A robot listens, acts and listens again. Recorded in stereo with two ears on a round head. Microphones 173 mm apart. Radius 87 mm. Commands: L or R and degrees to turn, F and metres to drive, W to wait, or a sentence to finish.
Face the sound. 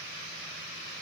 W
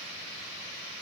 W
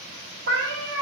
R60
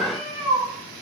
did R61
R25
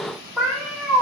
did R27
Facing the cat meowing.